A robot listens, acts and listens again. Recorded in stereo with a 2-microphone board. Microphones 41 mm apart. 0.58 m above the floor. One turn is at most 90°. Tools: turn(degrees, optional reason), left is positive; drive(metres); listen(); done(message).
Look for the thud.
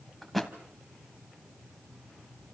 turn(degrees=30)
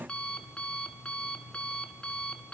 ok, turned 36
listen()
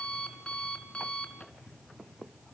done("I heard a thud, but can't make it out now. It was about 35° right or 140° left.")